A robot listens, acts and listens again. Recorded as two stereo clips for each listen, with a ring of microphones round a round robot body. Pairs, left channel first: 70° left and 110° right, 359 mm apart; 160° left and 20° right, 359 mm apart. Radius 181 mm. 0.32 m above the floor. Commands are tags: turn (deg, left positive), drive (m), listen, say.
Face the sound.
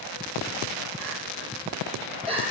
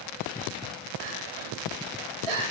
<turn deg="-35"/>
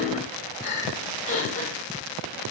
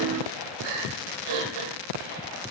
<say>Facing the crying, 2 to 4 m away.</say>